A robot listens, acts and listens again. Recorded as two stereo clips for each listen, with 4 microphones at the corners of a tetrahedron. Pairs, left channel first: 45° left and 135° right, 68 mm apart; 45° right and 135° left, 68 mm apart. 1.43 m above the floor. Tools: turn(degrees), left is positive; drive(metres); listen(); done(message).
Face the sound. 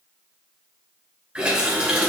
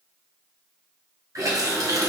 turn(degrees=155)
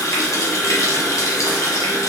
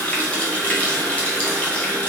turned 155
turn(degrees=25)
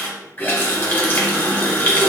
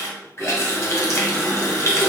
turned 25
done("Facing the running tap, under 1 m away.")